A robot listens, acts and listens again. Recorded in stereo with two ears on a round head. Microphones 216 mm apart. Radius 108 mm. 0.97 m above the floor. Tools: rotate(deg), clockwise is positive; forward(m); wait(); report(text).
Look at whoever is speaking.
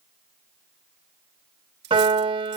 wait()
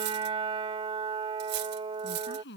rotate(-45)
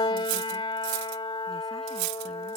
wait()
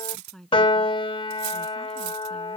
report("Facing the woman speaking.")